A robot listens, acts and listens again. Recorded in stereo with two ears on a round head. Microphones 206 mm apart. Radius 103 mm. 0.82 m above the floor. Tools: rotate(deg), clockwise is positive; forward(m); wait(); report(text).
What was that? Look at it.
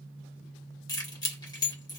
rotate(-20)
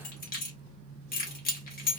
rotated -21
rotate(-140)
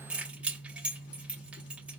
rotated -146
report("Facing the keys jangling, 1 to 2 m away.")